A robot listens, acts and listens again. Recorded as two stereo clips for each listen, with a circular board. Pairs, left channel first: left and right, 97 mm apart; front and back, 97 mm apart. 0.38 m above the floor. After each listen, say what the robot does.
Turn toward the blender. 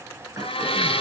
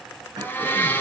Turn 70° left.
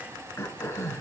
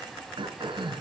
Keep listening.
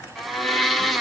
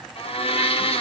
Found it: a blender, straight ahead, 1 to 2 m away.